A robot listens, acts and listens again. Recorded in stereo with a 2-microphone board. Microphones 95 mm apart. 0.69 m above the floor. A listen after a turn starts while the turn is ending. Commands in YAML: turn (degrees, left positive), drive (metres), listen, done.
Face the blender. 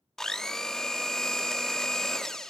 turn: 30
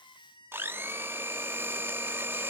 turn: -25
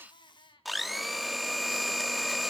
done: "Facing the blender."